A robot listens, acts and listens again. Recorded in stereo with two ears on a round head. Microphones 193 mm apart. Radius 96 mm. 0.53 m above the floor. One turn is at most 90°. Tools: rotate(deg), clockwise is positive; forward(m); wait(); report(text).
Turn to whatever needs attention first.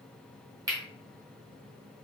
wait()
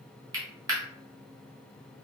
wait()
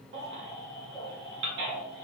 rotate(55)
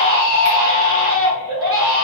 rotate(70)
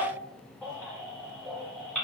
report("Facing the baby crying.")